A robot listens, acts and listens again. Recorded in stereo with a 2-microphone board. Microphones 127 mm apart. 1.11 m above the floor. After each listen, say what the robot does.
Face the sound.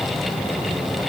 Keep listening.
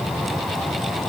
Keep listening.
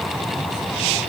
I can't make out anything to turn to.